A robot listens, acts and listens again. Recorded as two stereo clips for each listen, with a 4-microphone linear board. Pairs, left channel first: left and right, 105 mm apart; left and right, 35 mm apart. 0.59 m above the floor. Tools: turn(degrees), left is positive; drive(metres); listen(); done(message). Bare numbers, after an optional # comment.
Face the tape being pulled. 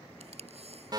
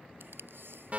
turn(-90)
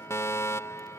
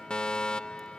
listen()
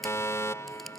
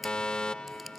done("Facing the tape being pulled.")